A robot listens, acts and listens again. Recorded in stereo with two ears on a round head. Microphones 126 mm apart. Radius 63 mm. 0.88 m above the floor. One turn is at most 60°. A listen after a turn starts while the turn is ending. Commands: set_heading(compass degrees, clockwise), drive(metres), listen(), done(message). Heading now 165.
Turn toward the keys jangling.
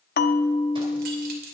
set_heading(225)
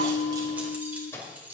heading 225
set_heading(235)
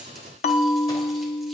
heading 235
listen()
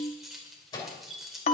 done("Found it: keys jangling, straight ahead, 2 to 4 m away.")